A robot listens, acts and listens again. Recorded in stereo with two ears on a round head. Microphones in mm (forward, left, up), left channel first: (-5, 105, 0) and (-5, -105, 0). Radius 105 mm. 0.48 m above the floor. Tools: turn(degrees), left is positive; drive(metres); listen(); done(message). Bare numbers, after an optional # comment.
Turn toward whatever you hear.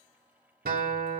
# The guitar: about 40° right or 140° right.
turn(-40)
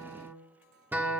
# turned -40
# So it is at 10° right.
turn(-10)
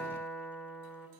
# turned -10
done("Found it: a guitar, straight ahead.")